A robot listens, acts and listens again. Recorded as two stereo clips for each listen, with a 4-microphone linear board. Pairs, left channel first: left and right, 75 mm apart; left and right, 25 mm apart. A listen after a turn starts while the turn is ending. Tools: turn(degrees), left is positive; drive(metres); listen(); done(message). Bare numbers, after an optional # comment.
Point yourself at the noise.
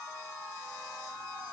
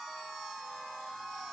listen()
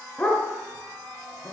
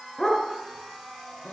# The dog barking: about 15° left or 165° left.
turn(15)
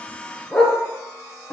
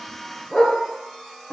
turn(30)
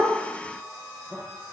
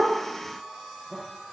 listen()
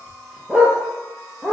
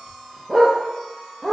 # So it is at 10° right.
turn(-10)
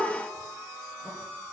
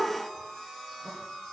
listen()
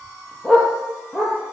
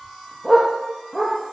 done("Facing the dog barking.")